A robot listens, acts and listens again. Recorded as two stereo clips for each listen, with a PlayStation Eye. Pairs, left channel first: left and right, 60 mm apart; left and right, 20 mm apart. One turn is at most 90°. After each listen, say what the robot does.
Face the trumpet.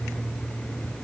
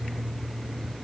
Keep listening.
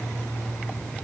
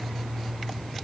Keep listening.
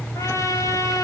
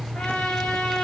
Turn 60° left.
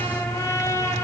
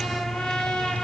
Turn 60° left.
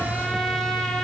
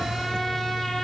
Keep listening.
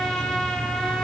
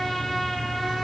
Facing the trumpet.